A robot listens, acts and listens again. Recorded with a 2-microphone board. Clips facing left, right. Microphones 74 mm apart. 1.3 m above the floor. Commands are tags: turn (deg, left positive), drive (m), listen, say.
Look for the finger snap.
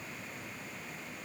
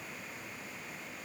<listen/>
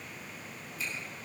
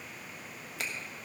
<turn deg="-75"/>
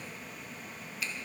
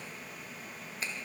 <turn deg="-35"/>
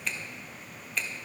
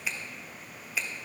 <say>Facing the finger snap, 1 to 2 m away.</say>